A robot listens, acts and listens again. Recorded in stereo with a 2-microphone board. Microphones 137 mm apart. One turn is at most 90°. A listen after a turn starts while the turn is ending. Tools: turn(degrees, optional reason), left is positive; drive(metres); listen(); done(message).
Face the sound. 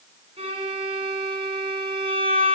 turn(degrees=-45, reason="The violin: about 45° right or 135° right.")
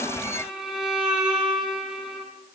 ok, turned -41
done("Found it: a violin, straight ahead.")